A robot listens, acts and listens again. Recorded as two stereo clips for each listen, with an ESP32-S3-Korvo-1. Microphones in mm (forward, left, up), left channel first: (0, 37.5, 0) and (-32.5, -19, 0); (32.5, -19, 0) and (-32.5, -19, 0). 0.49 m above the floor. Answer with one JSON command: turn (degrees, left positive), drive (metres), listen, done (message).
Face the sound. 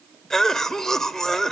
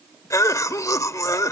{"turn": -20}
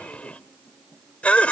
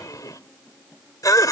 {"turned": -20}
{"turn": -10}
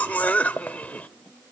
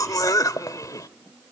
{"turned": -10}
{"done": "Found it: a cough, straight ahead, 1 to 2 m away."}